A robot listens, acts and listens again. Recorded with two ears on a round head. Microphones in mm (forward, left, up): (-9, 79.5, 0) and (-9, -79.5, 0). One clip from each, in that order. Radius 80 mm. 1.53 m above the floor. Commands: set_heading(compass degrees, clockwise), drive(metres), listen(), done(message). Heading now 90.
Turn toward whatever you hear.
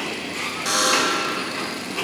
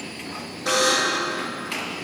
set_heading(40)
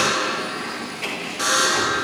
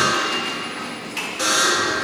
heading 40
done("Found it: a buzzer, straight ahead.")